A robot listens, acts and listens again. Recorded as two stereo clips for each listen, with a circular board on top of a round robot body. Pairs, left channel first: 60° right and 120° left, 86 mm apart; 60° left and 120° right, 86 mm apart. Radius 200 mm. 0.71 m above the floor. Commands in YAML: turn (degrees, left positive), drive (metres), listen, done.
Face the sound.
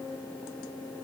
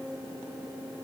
listen: true
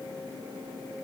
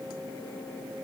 listen: true
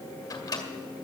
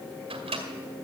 turn: -105
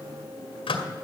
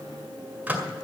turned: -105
turn: -45
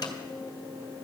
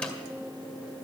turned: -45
listen: true
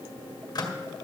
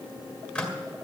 turn: -15
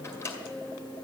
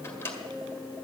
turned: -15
done: "Facing the microwave."